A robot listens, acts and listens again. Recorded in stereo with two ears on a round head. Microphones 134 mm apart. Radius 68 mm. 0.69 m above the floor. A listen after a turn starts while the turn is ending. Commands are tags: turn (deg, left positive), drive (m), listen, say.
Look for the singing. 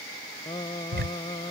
<turn deg="30"/>
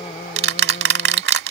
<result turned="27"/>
<listen/>
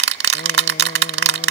<listen/>
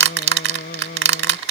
<turn deg="115"/>
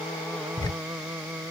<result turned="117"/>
<say>Facing the singing.</say>